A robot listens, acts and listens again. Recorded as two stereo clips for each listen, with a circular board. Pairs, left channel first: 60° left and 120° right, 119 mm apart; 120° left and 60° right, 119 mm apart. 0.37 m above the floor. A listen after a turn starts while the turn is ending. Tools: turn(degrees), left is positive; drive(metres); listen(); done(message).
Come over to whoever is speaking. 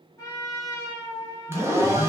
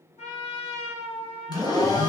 turn(degrees=-115)
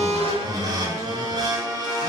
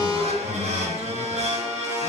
drive(metres=1.0)
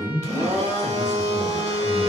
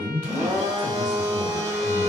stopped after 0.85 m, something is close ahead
done("Arrived at the man speaking, straight ahead.")